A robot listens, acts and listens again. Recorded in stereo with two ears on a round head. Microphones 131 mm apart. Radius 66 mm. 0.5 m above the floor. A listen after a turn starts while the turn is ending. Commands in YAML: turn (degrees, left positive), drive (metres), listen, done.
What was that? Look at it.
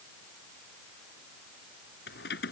turn: 90
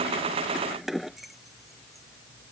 done: "Found it: keys jangling, straight ahead."